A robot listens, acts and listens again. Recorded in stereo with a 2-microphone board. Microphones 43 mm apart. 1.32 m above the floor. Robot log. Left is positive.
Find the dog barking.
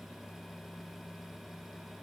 cmd idle
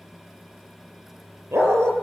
cmd yaw -90
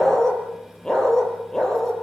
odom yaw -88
note: So it is at 15° left.
cmd yaw +15
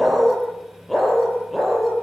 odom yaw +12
end: Found it: a dog barking, straight ahead.